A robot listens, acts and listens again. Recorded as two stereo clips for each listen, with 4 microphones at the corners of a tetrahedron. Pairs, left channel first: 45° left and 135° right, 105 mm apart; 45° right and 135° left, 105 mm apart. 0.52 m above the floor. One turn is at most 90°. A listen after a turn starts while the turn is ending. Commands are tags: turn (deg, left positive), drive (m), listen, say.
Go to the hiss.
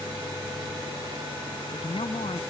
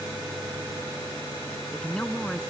<listen/>
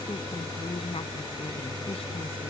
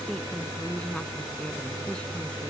<listen/>
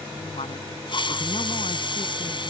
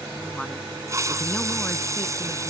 <turn deg="80"/>
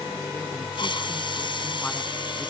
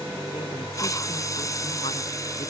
<turn deg="10"/>
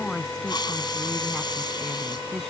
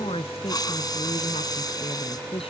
<drive m="1.0"/>
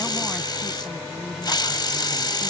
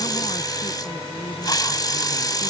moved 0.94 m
<drive m="1.0"/>
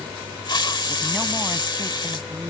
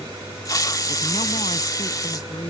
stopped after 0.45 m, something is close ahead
<say>I am next to the hiss.</say>